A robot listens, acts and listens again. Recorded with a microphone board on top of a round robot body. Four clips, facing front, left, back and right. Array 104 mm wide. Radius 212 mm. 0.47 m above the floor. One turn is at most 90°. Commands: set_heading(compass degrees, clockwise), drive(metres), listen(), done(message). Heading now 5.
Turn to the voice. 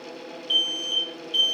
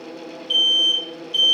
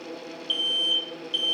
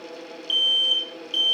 listen()
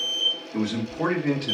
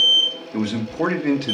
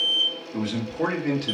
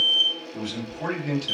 set_heading(275)
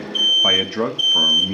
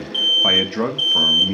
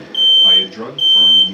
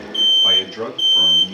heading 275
set_heading(220)
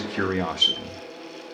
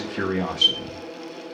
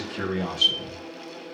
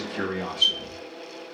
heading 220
set_heading(200)
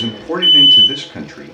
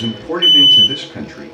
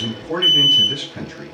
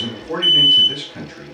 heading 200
set_heading(180)
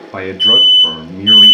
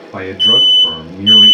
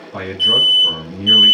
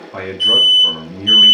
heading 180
done("Found it: a man speaking, straight ahead.")